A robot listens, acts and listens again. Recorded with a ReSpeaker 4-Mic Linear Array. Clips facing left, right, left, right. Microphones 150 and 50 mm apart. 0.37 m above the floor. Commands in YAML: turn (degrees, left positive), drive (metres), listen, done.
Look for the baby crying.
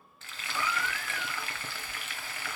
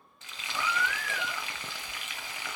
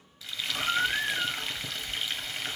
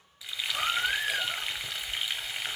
turn: -90
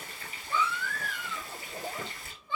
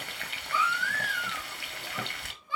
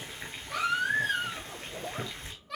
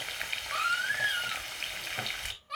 turn: -10
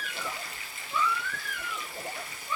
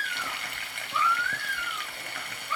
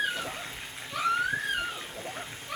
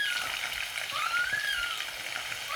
done: "Found it: a baby crying, straight ahead, over 4 m away."